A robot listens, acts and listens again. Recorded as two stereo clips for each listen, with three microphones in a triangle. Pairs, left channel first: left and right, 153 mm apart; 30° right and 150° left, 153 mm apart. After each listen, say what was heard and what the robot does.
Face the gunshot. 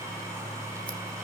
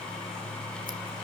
Keep listening.
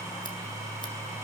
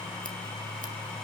Keep listening.
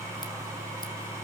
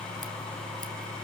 I can't make out a gunshot.